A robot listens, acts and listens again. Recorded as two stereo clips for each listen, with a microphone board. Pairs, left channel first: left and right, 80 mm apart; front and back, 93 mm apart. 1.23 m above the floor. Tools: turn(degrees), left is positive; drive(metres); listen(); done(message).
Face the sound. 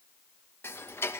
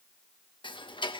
turn(degrees=30)
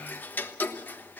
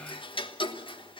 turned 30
turn(degrees=20)
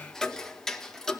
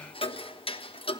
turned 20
done("Facing the ticking, 1 to 2 m away.")